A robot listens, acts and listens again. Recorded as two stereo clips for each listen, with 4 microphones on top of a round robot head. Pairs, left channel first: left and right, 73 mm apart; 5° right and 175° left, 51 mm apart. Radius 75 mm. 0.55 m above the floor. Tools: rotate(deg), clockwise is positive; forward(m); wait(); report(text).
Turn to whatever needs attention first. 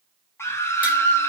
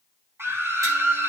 rotate(-145)
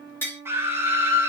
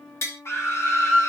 rotate(30)
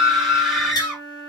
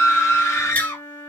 report("Found it: a scream, straight ahead, 1 to 2 m away.")